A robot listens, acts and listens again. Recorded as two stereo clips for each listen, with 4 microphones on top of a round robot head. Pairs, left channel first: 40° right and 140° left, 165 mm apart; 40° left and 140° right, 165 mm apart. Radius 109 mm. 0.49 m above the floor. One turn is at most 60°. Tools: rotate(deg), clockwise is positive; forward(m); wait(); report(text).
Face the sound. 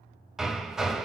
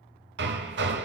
rotate(60)
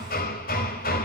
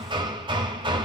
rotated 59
rotate(60)
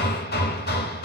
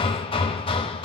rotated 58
rotate(15)
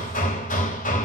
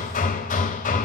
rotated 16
report("Facing the hammering, under 1 m away.")